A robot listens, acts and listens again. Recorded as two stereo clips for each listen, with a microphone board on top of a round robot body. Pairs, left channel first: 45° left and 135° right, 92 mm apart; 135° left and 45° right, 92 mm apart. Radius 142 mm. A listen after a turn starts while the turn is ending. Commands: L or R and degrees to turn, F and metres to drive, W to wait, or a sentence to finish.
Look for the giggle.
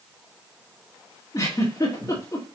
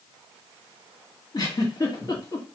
L95
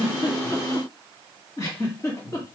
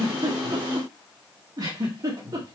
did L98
Found it: a giggle, straight ahead.